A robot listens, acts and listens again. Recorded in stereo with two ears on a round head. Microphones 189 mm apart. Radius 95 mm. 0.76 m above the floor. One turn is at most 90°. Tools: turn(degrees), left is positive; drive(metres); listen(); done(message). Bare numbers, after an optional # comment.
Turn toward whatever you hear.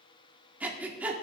turn(-30)
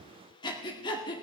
# So it is at 25° left.
turn(25)
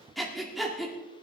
done("Facing the breathing.")